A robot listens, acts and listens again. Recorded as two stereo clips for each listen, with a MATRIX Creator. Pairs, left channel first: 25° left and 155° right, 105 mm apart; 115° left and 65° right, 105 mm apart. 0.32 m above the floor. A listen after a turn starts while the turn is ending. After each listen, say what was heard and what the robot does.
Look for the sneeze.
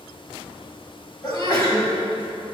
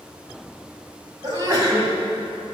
The sneeze: 20° right. Turn 20° right.
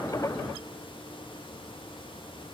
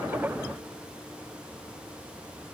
Facing where the sneeze came from. I can't hear it now.